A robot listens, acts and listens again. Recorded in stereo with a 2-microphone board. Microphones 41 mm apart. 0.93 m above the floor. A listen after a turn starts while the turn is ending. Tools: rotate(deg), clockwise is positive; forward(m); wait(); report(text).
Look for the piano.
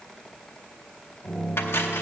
rotate(-40)
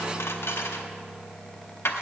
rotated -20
rotate(-120)
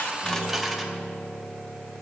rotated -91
rotate(-30)
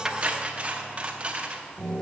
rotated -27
report("Found it: a piano, straight ahead, 2 to 4 m away.")